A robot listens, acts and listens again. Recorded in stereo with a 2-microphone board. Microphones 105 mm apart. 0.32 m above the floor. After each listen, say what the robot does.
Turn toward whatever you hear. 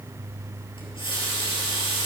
Turn 50° left.
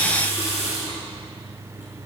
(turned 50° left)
Turn 80° left.
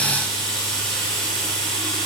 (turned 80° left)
Found it: a running tap, straight ahead.